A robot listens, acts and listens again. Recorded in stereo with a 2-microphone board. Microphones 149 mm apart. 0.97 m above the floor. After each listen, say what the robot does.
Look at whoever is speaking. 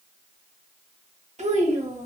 Turn 50° right.
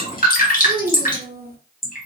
Turn 80° right.
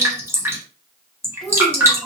Facing the child speaking, 1 to 2 m away.